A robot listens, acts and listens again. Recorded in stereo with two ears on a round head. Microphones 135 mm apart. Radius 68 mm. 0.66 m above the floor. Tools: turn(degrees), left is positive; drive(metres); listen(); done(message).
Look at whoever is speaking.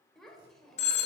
turn(degrees=30)
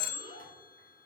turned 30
turn(degrees=150)
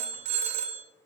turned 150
listen()
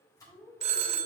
done("Facing the child speaking.")